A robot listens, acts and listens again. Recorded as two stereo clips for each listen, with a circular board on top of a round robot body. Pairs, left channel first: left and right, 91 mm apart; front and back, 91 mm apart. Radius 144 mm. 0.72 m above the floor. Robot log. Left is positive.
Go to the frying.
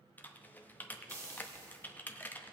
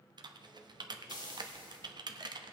note: The frying: 35° right.
cmd yaw -35
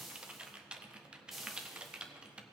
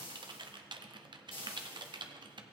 cmd fwd 1.0
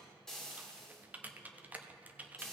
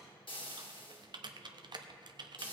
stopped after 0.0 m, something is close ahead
end: Blocked. The frying is further on, straight ahead.